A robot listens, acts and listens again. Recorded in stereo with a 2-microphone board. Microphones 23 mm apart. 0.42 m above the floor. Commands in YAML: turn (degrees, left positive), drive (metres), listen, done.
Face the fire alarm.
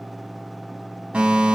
turn: -70
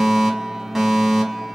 turn: -20
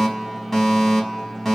turn: 10
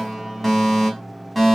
done: "Facing the fire alarm."